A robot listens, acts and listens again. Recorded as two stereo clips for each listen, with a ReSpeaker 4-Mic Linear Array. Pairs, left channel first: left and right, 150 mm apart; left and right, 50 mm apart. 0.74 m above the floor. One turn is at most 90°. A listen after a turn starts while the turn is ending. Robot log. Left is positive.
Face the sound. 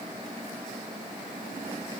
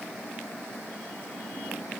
cmd idle
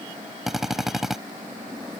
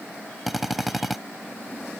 cmd yaw -30
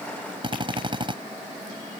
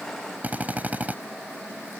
note: So it is at 145° right.
cmd yaw -90
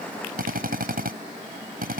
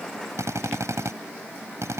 note: The drill is now 85° right.
cmd yaw -85
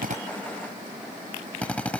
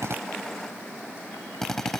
note: The drill is now 10° left.
cmd yaw +10
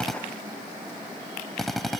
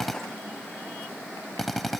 end: Found it: a drill, straight ahead.